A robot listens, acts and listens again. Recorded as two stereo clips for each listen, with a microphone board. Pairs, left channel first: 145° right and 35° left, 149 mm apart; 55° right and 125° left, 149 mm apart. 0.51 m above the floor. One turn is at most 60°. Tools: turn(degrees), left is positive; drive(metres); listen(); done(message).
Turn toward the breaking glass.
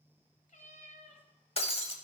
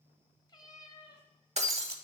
turn(degrees=60)
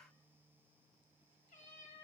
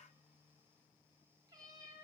turn(degrees=60)
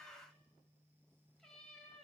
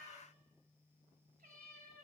turn(degrees=45)
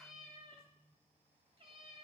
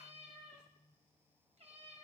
done("I heard breaking glass from this way, but can't make it out now.")